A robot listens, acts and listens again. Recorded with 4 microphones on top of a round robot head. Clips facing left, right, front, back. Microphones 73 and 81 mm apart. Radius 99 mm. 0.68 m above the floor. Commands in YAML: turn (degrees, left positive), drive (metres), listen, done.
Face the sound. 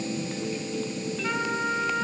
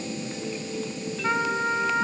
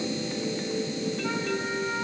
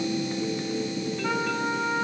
turn: -155
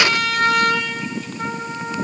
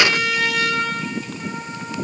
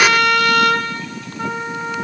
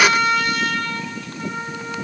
turn: 35
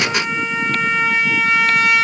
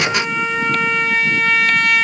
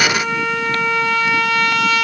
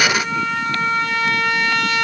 done: "Facing the trumpet."